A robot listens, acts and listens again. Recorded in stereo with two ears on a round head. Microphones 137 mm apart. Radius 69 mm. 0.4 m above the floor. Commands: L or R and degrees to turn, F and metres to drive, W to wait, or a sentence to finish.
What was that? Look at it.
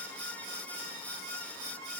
W
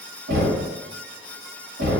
R70
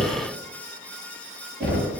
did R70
Facing the knocking, 1 to 2 m away.